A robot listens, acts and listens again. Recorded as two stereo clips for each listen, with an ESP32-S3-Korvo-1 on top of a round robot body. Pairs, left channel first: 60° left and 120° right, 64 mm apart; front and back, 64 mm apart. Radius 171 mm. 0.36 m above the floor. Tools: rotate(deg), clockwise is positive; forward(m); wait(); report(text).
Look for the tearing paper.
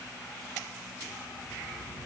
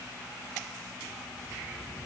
wait()
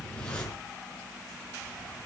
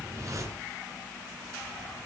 wait()
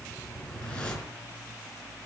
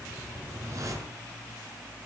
report("I can't make out tearing paper, only a whoosh.")